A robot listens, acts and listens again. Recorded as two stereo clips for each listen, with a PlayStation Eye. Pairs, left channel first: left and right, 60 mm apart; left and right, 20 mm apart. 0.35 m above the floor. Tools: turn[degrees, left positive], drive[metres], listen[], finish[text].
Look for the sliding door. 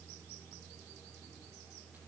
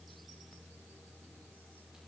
Action: listen[]
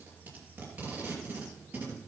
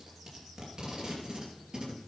Action: listen[]
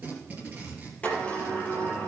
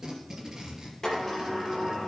Thought: The sliding door: about 20° left or 160° left.
Action: turn[20]
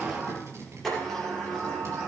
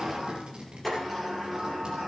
Action: finish[Facing the sliding door.]